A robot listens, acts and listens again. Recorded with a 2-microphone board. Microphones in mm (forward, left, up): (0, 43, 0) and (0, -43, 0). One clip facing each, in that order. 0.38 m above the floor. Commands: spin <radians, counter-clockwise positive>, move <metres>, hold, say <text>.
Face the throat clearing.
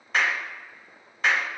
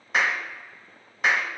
hold
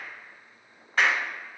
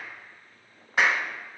hold
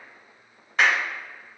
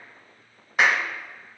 say I can't make out throat clearing, only a clap.